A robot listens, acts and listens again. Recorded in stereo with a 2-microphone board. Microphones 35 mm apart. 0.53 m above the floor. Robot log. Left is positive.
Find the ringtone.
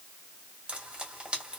cmd idle
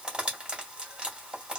cmd idle
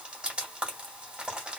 end: I can't make out a ringtone, only frying.